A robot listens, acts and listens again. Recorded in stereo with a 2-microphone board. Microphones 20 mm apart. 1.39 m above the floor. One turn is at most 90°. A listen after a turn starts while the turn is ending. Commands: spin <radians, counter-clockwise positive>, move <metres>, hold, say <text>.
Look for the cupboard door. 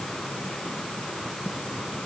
hold
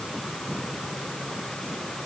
hold
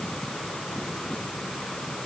say I can't make out a cupboard door.